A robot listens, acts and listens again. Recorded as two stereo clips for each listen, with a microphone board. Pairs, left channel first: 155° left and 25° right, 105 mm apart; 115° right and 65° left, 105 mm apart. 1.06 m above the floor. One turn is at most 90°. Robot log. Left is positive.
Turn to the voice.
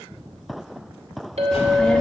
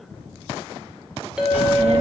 note: The child speaking: 75° left.
cmd yaw +75
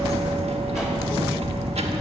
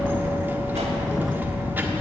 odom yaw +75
end: Facing the child speaking, 1 to 2 m away.